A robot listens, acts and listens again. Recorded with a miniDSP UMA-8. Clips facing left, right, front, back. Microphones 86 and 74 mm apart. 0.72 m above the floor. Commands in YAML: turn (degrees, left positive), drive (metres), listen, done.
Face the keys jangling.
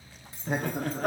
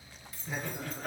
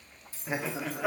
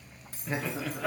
turn: 150
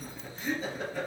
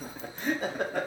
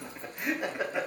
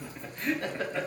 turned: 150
listen: true
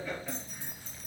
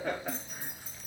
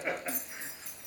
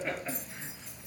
turn: -10
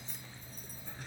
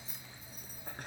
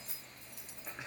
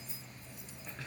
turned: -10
done: "Facing the keys jangling."